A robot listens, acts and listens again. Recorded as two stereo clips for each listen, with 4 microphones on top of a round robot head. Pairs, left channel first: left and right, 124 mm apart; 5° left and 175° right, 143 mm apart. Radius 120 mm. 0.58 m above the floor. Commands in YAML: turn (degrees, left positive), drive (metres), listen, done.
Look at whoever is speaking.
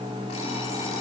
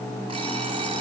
listen: true
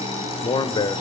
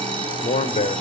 turn: 40
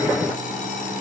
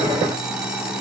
listen: true
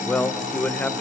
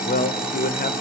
turn: 10
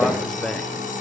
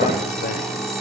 listen: true
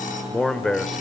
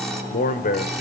done: "Facing the man speaking."